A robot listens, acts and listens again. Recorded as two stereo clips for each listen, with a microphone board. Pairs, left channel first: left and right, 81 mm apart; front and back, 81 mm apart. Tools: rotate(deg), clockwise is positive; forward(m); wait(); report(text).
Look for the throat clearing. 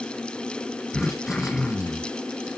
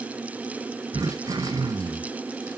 rotate(-170)
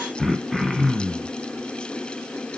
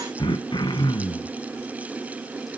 report("Found it: throat clearing, straight ahead, 1 to 2 m away.")